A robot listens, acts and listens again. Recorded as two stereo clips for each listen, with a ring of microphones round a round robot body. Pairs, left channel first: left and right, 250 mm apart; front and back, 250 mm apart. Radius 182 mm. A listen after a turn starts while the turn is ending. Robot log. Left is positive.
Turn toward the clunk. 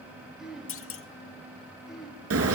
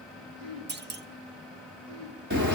note: The clunk: 130° left.
cmd yaw +130
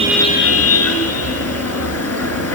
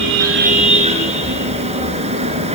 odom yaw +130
end: Facing where the clunk came from. I can't hear it now.